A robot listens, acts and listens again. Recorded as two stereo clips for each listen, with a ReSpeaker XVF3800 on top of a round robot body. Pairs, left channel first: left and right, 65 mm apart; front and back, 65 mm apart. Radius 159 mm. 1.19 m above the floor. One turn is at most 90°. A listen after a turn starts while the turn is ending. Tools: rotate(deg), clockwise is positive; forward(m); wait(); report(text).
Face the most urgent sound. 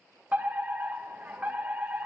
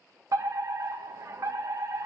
rotate(90)
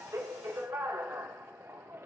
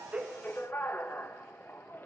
rotate(50)
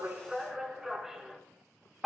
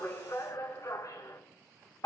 rotate(10)
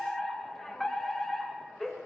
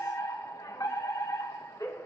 report("Facing the fire alarm, 2 to 4 m away.")